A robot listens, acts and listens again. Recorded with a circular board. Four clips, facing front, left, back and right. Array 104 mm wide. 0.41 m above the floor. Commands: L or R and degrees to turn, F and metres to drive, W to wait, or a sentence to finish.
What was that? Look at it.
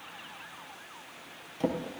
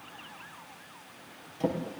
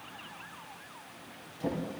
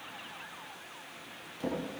L25
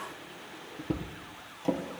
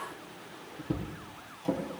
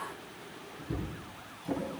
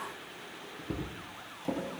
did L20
Found it: a drawer, straight ahead, over 4 m away.